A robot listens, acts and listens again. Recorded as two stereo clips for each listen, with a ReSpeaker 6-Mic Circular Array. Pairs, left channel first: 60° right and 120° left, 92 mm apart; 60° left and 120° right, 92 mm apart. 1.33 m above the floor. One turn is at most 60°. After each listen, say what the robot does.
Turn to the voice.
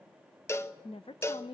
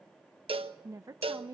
Turn 60° right.
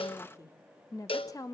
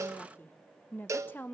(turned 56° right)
Turn 10° right.
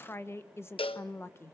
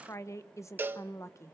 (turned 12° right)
Facing the woman speaking.